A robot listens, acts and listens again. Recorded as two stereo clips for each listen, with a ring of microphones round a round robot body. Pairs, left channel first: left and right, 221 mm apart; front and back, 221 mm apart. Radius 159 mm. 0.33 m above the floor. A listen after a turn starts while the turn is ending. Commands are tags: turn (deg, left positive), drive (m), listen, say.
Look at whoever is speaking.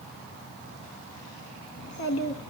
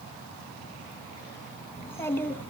<turn deg="80"/>
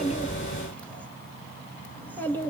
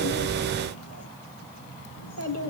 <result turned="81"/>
<turn deg="10"/>
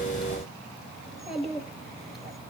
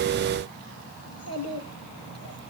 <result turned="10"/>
<say>Facing the child speaking.</say>